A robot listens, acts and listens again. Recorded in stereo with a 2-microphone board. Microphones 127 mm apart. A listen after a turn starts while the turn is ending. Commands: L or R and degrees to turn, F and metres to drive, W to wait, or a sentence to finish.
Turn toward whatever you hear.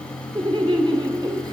R35
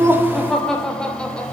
L10
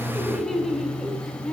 Facing the laughter.